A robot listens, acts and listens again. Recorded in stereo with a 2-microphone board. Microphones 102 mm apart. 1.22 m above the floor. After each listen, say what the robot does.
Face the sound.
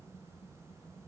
Keep listening.
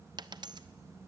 Turn 45° right.
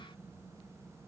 Keep listening.
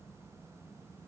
I heard a dropped coin, but can't make it out now. It was about straight ahead or 90° right.